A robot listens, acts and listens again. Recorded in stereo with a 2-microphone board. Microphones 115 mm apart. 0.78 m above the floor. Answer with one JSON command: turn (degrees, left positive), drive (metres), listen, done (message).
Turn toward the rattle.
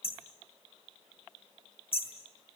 {"listen": true}
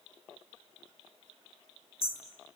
{"listen": true}
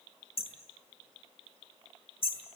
{"done": "I can't make out a rattle, only hammering."}